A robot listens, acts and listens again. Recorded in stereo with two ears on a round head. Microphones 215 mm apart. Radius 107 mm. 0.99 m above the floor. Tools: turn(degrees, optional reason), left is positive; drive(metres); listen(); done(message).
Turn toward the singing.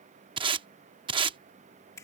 listen()
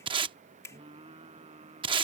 turn(degrees=-25, reason="The singing: about 25° right or 155° right.")
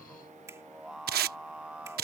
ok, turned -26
done("Found it: singing, straight ahead.")